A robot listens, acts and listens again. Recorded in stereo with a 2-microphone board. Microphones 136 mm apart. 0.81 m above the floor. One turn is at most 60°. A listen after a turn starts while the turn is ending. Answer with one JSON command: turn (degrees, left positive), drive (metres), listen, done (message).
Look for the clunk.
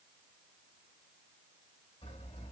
{"listen": true}
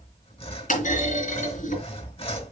{"turn": 60}
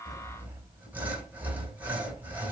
{"turn": 30}
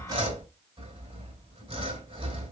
{"done": "Facing where the clunk came from. I can't hear it now."}